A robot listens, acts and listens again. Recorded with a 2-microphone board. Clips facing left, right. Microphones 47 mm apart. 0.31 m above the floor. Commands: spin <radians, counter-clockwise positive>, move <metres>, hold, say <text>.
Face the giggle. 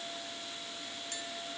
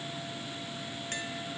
hold
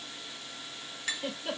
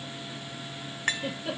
spin 0.52
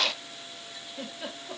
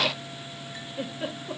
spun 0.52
spin -0.52
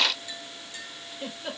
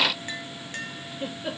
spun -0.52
spin -0.17
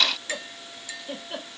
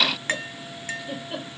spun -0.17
say Facing the giggle.